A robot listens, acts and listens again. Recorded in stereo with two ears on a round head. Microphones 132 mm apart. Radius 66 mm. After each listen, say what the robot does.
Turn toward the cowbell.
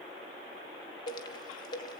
Turn 90° left.
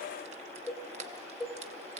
Found it: a cowbell, straight ahead, 2 to 4 m away.